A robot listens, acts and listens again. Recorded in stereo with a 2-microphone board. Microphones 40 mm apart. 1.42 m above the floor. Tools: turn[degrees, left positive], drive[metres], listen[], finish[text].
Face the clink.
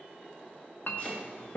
Thought: The clink: about 60° left or 120° left.
Action: turn[60]
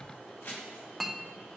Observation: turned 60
Action: finish[Facing the clink, under 1 m away.]